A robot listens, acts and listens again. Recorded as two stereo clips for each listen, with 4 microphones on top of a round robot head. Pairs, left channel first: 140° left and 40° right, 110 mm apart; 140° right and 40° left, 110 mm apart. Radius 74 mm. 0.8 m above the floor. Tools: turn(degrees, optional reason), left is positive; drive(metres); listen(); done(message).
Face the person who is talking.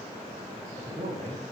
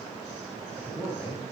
turn(degrees=-45, reason="The man speaking: 45° right.")
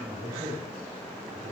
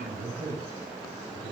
turn(degrees=-10, reason="The man speaking is now 10° right.")
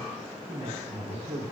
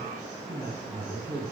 turn(degrees=-25, reason="The man speaking is now 25° right.")
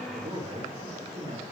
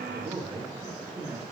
turn(degrees=-20, reason="The man speaking is now 20° right.")
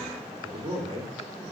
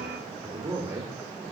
done("Found it: a man speaking, straight ahead, 2 to 4 m away.")